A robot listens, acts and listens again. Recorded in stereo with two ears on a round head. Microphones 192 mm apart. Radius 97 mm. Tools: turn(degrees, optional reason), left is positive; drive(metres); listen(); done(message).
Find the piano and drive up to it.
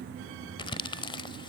listen()
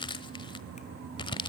listen()
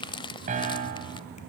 turn(degrees=-35, reason="The piano: about 35° right or 145° right.")
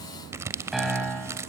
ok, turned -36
drive(metres=1.0)
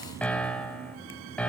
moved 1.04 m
drive(metres=1.0)
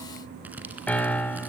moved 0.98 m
drive(metres=1.0)
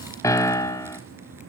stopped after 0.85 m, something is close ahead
turn(degrees=20, reason="The piano is now 20° left.")
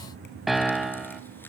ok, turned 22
done("Arrived at the piano, straight ahead.")